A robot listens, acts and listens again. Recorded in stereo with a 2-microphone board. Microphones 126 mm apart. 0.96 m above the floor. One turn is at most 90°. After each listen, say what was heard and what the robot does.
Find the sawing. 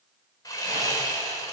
The sawing: about 25° left or 155° left. Turn 25° left.
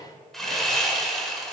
Facing the sawing, 1 to 2 m away.